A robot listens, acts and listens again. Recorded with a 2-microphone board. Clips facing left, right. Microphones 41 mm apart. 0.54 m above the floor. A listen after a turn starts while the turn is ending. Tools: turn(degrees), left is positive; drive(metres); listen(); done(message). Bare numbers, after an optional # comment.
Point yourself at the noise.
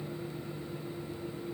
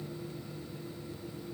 listen()
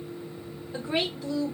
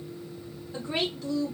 turn(30)
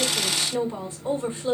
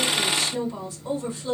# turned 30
# So it is at 140° left.
turn(140)
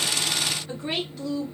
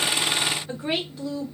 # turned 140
# The woman speaking is now 10° right.
turn(-10)
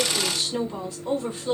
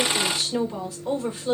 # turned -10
done("Found it: a woman speaking, straight ahead.")